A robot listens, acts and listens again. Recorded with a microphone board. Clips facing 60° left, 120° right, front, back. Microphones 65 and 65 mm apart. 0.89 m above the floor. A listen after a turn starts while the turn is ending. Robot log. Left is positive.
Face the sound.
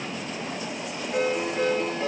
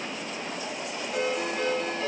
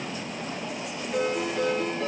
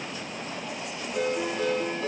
end: Found it: a ringtone, straight ahead.